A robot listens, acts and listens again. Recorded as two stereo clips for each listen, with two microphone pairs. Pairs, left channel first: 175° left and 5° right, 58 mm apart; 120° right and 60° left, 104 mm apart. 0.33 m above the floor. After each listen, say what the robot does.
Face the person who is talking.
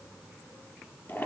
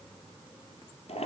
Keep listening.
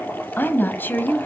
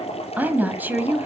Turn 130° left.
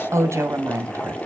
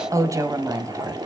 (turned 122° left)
Found it: a woman speaking, straight ahead.